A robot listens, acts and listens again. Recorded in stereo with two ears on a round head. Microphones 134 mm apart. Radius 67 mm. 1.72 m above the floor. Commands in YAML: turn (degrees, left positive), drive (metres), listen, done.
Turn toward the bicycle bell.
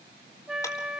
listen: true
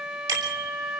turn: -30
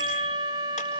listen: true
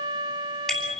done: "Facing the bicycle bell, over 4 m away."